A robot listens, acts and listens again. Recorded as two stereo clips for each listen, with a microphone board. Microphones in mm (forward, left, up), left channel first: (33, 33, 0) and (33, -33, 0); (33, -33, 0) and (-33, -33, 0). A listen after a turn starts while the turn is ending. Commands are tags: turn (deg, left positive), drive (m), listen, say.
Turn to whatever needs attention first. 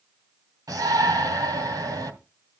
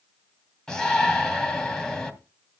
<turn deg="-80"/>
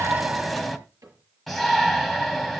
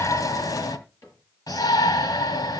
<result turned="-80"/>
<say>Facing the shout, 2 to 4 m away.</say>